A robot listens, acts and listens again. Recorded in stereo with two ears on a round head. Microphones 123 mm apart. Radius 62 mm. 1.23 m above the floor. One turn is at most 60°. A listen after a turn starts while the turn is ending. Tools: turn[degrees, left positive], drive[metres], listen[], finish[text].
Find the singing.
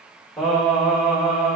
Action: turn[-30]
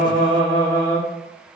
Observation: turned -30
Action: finish[Facing the singing, 2 to 4 m away.]